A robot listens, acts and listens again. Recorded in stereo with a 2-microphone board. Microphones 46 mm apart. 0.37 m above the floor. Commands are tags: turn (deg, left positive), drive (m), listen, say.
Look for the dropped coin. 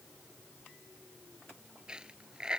<turn deg="-20"/>
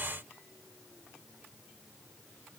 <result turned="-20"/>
<listen/>
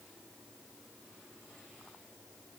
<say>I heard a dropped coin, but can't make it out now. It was about straight ahead or 140° right.</say>